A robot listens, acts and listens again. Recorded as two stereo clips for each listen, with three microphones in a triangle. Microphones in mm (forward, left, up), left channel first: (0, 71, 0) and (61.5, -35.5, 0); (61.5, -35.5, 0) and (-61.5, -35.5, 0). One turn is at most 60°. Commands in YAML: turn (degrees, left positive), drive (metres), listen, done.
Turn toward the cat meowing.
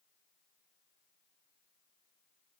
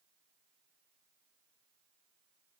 listen: true
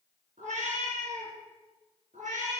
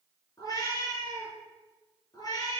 turn: -60
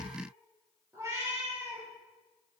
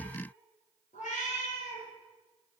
done: "Found it: a cat meowing, straight ahead, over 4 m away."